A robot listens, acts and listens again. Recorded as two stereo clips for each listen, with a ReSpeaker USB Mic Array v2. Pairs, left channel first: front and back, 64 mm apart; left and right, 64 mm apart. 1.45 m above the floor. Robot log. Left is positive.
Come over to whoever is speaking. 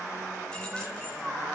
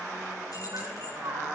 cmd idle
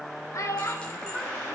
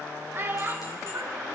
note: The child speaking: 35° right.
cmd yaw -35
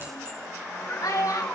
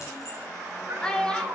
note: The child speaking is now 15° left.
cmd yaw +15
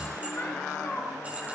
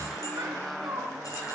cmd idle
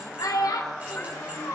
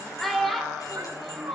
cmd fwd 1.0
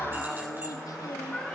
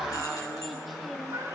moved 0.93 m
cmd idle
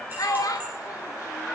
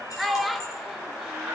cmd fwd 1.0
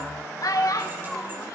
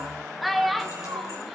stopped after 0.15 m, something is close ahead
end: Arrived at the child speaking, straight ahead.